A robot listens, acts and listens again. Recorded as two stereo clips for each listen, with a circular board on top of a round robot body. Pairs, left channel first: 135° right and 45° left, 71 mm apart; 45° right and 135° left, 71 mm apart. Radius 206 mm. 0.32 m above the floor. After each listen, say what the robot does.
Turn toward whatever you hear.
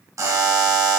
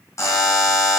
Facing the buzzer, 1 to 2 m away.